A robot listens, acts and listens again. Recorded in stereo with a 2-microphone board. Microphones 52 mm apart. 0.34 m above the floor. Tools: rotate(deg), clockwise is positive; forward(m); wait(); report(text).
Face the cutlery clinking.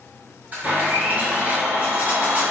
rotate(35)
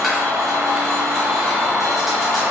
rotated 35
wait()
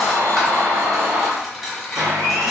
report("Facing the cutlery clinking.")